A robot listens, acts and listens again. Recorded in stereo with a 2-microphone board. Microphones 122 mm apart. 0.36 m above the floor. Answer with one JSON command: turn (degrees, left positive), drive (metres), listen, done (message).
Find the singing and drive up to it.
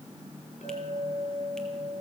{"listen": true}
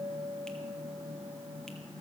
{"listen": true}
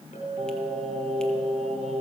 {"turn": -65}
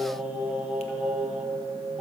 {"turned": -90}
{"turn": -10}
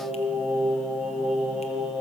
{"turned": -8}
{"drive": 1.0}
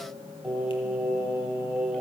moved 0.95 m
{"turn": -10}
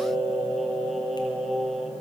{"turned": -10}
{"drive": 1.0}
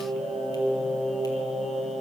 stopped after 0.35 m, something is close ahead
{"done": "I am next to the singing."}